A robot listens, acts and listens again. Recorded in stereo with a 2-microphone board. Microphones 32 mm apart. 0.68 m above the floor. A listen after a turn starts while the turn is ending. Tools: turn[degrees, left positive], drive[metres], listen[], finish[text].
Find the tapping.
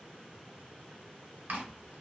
Action: listen[]
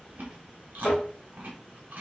Thought: The tapping: about 50° left or 130° left.
Action: turn[50]
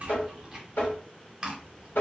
Thought: So it is at 80° left.
Action: turn[80]
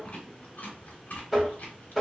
Thought: The tapping is now 10° right.
Action: turn[-10]
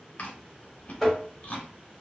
Action: finish[Found it: tapping, straight ahead.]